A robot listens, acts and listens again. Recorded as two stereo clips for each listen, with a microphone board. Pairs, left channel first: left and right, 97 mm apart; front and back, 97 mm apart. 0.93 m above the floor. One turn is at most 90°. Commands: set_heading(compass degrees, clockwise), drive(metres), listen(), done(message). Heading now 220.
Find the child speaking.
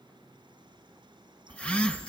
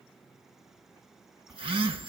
listen()
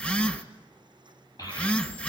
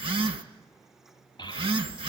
set_heading(180)
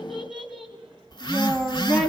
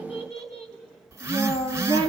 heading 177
done("Facing the child speaking.")